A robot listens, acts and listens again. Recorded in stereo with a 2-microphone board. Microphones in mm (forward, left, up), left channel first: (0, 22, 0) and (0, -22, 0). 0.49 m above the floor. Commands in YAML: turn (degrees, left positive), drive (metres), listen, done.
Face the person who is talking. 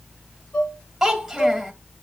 turn: -30
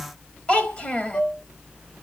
turn: 30
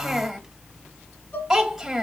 done: "Found it: a child speaking, straight ahead, 1 to 2 m away."